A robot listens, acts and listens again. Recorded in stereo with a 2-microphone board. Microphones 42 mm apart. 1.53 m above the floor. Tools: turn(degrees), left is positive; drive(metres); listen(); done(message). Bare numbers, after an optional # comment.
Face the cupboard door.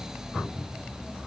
# The cupboard door: about 35° left or 145° left.
turn(35)
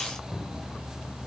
done("Facing the cupboard door, 2 to 4 m away.")